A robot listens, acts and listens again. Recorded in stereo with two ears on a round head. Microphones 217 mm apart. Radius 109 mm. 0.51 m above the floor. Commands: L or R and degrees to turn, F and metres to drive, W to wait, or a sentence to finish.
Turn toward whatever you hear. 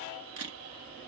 R65
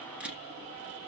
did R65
Facing the camera shutter, 1 to 2 m away.